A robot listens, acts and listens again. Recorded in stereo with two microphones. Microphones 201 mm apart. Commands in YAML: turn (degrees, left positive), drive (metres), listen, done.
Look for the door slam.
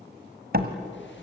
turn: -55
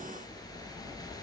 listen: true
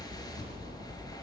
done: "I heard a door slam, but can't make it out now. It was about straight ahead or 70° right."